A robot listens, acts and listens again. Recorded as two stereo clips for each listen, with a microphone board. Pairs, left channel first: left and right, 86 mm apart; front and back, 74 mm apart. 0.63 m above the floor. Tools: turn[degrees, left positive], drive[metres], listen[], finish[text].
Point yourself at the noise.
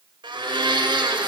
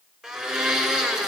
Thought: The blender: 105° right.
Action: turn[-105]
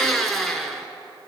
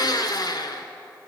Action: finish[Facing the blender.]